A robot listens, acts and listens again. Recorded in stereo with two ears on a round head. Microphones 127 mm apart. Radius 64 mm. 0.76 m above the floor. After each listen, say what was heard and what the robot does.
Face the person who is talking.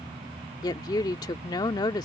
The woman speaking: about 30° left or 150° left. Turn 30° left.
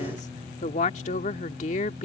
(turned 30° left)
So it is at 120° left. Turn 120° left.
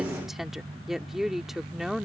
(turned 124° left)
Found it: a woman speaking, straight ahead.